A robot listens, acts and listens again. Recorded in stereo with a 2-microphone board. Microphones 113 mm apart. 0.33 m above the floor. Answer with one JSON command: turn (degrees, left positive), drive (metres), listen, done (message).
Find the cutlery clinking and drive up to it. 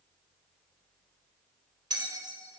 {"listen": true}
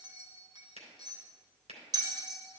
{"listen": true}
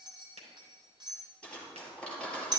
{"turn": 30}
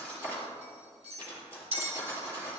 {"turn": -20}
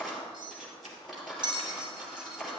{"drive": 1.0}
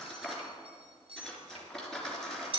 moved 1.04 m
{"drive": 1.0}
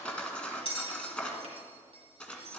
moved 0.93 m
{"turn": 10}
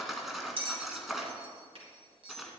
{"drive": 1.0}
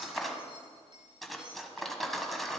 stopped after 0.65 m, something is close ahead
{"done": "Arrived at the cutlery clinking, straight ahead."}